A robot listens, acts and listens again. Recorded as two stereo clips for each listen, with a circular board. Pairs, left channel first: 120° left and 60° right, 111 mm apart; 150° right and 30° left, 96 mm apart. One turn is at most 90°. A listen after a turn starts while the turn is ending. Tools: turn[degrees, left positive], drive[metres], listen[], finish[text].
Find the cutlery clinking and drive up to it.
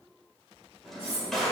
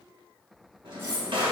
Thought: The cutlery clinking: 90° left.
Action: turn[90]
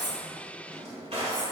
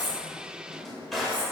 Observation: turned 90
Action: listen[]
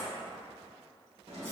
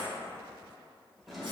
Action: listen[]
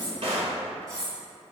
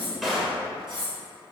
Action: drive[1.0]
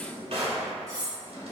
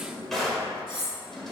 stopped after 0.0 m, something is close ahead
Action: finish[Blocked. The cutlery clinking is further on, straight ahead.]